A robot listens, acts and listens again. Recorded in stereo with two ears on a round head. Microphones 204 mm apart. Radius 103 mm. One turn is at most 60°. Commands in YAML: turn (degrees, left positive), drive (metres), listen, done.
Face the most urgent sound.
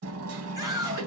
turn: -15
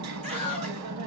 turn: -60
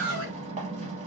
turn: -60
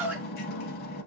turn: -10
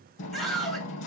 done: "Facing the scream."